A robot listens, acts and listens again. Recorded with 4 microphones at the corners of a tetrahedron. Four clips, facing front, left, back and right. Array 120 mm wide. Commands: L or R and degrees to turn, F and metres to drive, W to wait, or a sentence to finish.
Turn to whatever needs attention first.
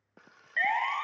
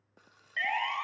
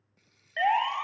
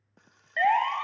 R120
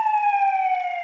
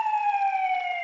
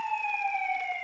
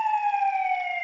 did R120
Facing the siren.